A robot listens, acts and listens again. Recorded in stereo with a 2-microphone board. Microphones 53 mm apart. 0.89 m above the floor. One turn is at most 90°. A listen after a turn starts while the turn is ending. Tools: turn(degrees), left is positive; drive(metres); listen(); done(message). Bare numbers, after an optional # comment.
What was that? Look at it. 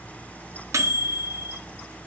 # The microwave: about 70° right or 110° right.
turn(-70)
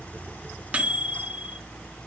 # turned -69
# So it is at 25° right.
turn(-25)
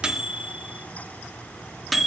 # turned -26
done("Found it: a microwave, straight ahead, under 1 m away.")